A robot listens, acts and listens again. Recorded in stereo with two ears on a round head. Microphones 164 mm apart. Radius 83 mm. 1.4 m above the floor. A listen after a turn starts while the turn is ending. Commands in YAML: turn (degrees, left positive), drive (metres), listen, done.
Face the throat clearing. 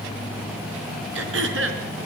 turn: -75
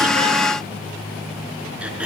done: "Found it: throat clearing, straight ahead, over 4 m away."